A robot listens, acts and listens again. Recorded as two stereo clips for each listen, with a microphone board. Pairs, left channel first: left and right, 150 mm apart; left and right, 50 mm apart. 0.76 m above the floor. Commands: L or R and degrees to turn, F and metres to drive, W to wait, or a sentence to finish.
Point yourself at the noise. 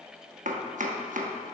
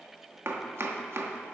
R55
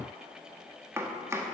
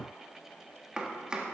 R20
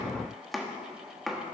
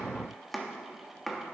Facing the chopping, 1 to 2 m away.